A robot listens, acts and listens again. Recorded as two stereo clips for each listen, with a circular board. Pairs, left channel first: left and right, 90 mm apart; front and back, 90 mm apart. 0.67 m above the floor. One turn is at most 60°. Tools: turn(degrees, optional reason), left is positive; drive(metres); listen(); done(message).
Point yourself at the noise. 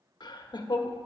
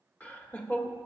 turn(degrees=60, reason="The laughter: 75° left.")
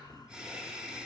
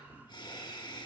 turn(degrees=-10, reason="The laughter is now 10° right.")
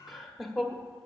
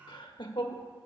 done("Facing the laughter, 1 to 2 m away.")